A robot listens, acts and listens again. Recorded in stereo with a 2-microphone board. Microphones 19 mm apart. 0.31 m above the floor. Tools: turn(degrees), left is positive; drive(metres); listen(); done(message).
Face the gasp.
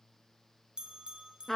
listen()
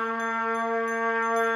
listen()
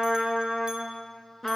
done("I can't make out a gasp, only a trumpet and a bell.")